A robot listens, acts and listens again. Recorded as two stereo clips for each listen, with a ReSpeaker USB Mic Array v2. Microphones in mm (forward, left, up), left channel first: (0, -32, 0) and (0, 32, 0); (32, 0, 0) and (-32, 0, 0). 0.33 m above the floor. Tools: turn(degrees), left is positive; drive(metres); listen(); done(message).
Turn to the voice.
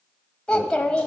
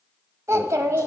turn(degrees=-165)
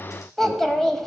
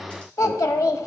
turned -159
done("Found it: a child speaking, straight ahead, 1 to 2 m away.")